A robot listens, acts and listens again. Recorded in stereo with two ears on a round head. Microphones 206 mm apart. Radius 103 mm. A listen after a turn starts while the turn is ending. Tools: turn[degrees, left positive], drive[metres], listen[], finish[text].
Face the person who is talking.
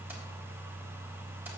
Action: listen[]
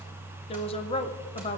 Thought: The woman speaking: about 25° left or 155° left.
Action: turn[25]
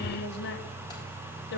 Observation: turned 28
Thought: So it is at 125° left.
Action: turn[125]
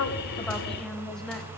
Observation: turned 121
Action: finish[Facing the woman speaking.]